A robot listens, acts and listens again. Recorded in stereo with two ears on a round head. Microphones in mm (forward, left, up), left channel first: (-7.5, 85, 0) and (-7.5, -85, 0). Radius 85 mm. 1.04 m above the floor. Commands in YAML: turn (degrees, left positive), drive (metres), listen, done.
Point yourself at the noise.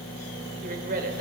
turn: -50
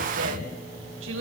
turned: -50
turn: -75
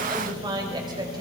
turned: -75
turn: -20
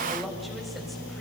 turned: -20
listen: true
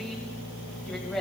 done: "Facing the woman speaking."